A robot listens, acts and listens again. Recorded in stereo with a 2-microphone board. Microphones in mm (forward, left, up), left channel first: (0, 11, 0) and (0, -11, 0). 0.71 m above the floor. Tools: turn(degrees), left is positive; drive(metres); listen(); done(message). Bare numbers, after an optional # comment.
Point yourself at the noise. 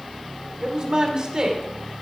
# The woman speaking: about 40° right or 140° right.
turn(-40)
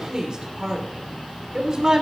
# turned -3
# The woman speaking: about 40° right or 140° right.
turn(-40)
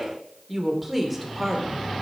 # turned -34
done("Found it: a woman speaking, straight ahead.")